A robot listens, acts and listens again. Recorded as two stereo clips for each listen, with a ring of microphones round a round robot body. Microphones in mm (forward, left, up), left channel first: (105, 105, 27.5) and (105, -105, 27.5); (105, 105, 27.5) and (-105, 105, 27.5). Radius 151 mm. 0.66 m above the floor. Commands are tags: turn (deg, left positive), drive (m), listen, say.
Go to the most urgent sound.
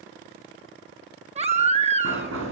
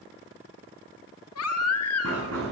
<turn deg="-30"/>
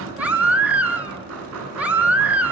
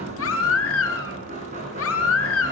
<drive m="1.0"/>
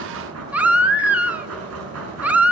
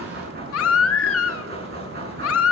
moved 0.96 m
<drive m="1.0"/>
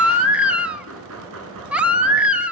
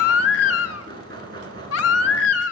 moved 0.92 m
<drive m="1.0"/>
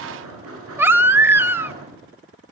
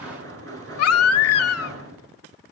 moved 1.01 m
<turn deg="-10"/>
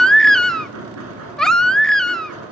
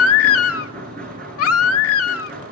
<drive m="1.0"/>
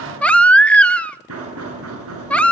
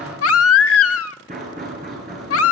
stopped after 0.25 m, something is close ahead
<say>Arrived at the baby crying, straight ahead.</say>